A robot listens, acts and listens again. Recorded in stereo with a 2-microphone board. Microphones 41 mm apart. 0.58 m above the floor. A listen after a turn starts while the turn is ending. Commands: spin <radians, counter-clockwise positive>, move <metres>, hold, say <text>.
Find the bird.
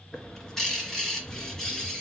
spin 0.52
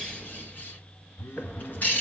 spin 2.36
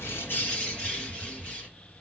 spin 0.52
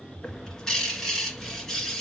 spin 0.17
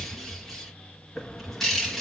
say Facing the bird.